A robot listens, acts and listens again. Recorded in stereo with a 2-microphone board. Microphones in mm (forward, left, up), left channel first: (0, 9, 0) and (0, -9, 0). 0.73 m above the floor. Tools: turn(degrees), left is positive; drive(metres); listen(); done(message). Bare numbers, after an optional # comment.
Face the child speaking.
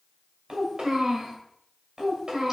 # The child speaking: about 70° right or 110° right.
turn(-70)
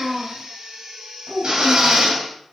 # So it is at 55° right.
turn(-55)
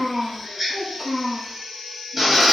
# The child speaking is now 20° right.
turn(-20)
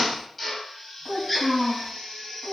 done("Found it: a child speaking, straight ahead.")